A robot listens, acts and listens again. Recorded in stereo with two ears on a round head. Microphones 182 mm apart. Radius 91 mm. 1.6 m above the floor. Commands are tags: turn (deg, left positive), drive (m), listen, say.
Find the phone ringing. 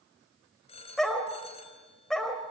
<turn deg="30"/>
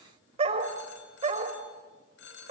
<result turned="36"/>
<turn deg="110"/>
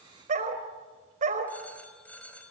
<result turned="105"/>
<turn deg="10"/>
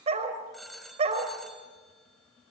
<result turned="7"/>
<say>Facing the phone ringing, over 4 m away.</say>